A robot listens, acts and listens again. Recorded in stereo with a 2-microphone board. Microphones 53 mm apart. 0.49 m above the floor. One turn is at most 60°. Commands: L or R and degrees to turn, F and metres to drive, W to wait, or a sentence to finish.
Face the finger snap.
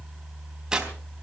W
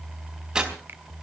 W
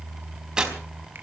I can't make out a finger snap to turn to.